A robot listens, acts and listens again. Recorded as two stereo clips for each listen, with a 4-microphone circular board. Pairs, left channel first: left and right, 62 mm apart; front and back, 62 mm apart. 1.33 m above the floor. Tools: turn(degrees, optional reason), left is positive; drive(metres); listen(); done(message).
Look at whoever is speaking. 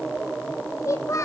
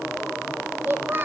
turn(degrees=125, reason="The child speaking: 125° left.")
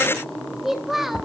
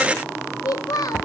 done("Facing the child speaking.")